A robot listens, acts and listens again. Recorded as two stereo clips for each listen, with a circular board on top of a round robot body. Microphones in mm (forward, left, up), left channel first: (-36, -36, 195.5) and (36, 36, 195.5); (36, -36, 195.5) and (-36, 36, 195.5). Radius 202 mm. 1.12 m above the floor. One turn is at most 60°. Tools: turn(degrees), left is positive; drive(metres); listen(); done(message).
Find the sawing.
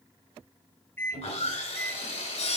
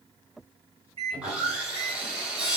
turn(degrees=-60)
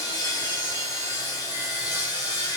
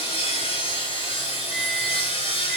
turn(degrees=-60)
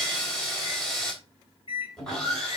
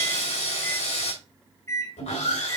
turn(degrees=-50)
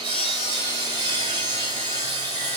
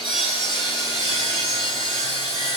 done("Facing the sawing.")